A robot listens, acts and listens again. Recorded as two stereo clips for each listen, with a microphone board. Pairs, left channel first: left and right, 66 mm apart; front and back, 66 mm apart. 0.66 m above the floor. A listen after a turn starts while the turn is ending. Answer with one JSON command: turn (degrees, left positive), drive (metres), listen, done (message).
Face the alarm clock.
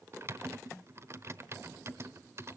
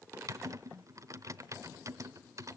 {"listen": true}
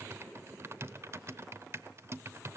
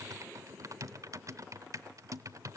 {"listen": true}
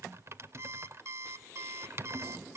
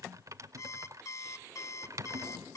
{"turn": -40}
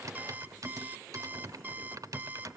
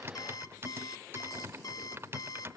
{"turn": -25}
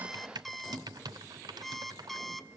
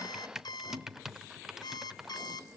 {"done": "Facing the alarm clock, 1 to 2 m away."}